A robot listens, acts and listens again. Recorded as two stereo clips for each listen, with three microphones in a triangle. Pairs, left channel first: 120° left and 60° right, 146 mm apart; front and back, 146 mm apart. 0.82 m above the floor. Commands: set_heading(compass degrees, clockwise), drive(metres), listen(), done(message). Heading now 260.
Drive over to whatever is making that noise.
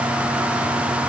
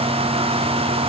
listen()
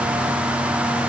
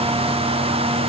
listen()
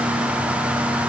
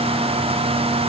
done("I can't make out anything to turn to.")